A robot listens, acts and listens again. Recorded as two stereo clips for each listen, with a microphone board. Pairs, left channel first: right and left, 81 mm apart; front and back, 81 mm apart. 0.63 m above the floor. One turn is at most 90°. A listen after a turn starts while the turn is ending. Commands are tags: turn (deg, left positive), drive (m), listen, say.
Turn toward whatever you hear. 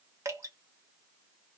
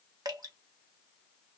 <turn deg="90"/>
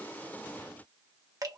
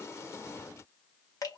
<turn deg="45"/>
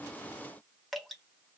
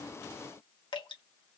<say>Found it: dripping, straight ahead, 1 to 2 m away.</say>